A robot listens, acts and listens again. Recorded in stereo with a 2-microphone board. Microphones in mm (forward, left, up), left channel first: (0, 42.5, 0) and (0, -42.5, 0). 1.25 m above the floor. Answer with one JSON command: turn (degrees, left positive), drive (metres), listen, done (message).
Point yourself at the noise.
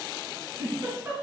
{"turn": -25}
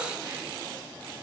{"listen": true}
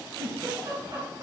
{"turn": -130}
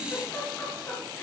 {"turn": 25}
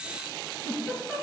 {"done": "Facing the giggle."}